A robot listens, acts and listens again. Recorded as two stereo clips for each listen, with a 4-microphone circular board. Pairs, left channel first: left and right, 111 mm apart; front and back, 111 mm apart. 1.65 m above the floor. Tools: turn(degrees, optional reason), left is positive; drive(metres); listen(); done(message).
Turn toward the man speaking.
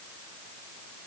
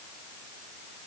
listen()
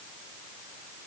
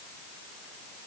listen()
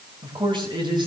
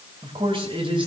turn(degrees=-140, reason="The man speaking: 140° right.")
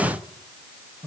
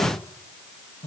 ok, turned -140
listen()
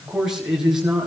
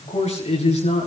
done("Facing the man speaking.")